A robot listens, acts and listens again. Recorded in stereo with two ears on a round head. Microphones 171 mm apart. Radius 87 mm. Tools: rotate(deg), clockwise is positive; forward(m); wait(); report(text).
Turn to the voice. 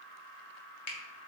wait()
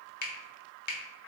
wait()
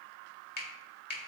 report("I can't make out anyone speaking, only a finger snap.")